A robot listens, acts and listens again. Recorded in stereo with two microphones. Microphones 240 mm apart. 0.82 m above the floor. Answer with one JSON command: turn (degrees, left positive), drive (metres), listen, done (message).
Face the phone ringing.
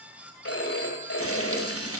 {"turn": 90}
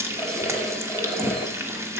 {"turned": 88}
{"listen": true}
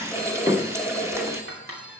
{"done": "Found it: a phone ringing, straight ahead."}